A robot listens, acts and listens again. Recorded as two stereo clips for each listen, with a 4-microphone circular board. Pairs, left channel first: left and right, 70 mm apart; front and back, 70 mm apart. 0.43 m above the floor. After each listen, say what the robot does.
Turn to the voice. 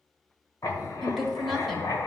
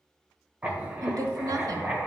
Turn 180° left.
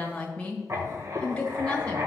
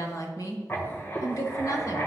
Turn 20° left.
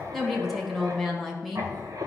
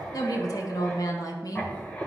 Facing the woman speaking.